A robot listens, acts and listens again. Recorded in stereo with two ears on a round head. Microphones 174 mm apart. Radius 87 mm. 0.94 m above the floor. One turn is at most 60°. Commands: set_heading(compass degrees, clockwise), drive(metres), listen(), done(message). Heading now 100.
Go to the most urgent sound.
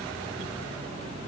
listen()
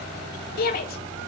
set_heading(50)
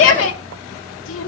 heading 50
set_heading(350)
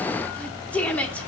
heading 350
set_heading(340)
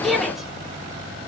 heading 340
drive(1.0)
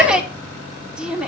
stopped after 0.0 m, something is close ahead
done("Blocked. The shout is further on, straight ahead.")